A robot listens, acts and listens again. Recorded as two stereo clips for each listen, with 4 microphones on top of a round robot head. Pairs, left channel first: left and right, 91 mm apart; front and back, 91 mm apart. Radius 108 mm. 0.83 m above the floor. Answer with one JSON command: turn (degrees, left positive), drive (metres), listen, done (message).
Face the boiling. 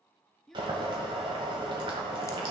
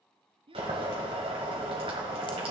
{"turn": -140}
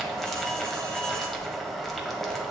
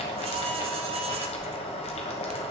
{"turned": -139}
{"done": "Found it: boiling, straight ahead."}